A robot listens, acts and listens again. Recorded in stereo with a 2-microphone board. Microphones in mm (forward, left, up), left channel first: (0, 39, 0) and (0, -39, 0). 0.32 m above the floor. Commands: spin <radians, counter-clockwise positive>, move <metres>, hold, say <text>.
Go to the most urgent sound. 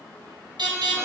spin -1.57
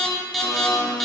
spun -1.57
move 1.0
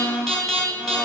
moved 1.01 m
move 1.0
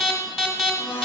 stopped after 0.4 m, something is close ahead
say I am next to the alarm.